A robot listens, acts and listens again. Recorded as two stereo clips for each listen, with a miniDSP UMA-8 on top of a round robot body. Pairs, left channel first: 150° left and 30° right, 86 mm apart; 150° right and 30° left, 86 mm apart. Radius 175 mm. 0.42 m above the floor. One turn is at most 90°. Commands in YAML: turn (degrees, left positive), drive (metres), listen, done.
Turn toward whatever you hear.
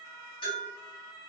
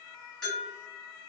turn: 90
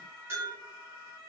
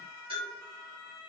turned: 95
turn: 30
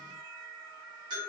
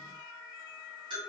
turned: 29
done: "Facing the bell."